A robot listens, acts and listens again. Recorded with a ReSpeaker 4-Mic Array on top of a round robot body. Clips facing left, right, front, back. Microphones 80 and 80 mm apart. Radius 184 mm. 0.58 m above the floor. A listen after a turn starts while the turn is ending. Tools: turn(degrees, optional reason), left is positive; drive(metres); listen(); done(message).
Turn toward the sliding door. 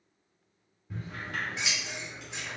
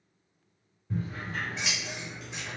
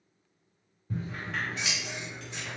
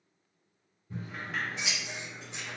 turn(degrees=95, reason="The sliding door: 95° left.")
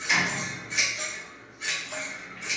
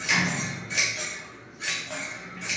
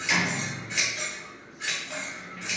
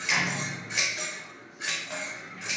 turn(degrees=-10, reason="The sliding door is now 10° right.")
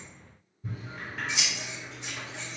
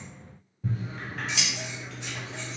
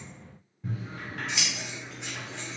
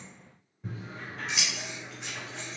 listen()
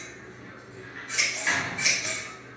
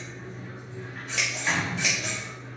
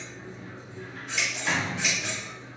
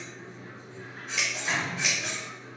done("Facing the sliding door.")